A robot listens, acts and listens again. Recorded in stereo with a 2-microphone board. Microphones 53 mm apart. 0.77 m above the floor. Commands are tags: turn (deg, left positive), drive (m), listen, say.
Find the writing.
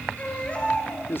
<listen/>
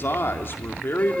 <listen/>
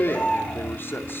<say>I can't make out writing, only a baby crying and a man speaking.</say>